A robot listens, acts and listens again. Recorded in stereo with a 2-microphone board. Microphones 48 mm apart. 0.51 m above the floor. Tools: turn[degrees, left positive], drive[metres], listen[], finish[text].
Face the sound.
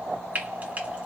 Thought: The frying: about 35° right or 145° right.
Action: turn[-35]
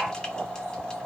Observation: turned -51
Action: listen[]
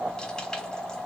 Action: listen[]
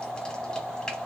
Action: finish[I heard frying, but can't make it out now. It was about 15° left or 95° right.]